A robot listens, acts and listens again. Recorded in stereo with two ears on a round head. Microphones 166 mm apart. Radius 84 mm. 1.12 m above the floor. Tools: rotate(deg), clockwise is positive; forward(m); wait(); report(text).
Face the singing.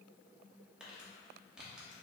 wait()
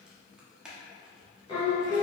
rotate(-20)
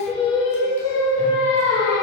rotate(-20)
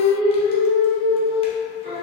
rotate(-35)
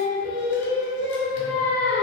rotate(-115)
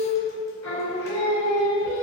rotate(-15)
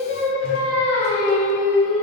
report("Found it: singing, straight ahead, 2 to 4 m away.")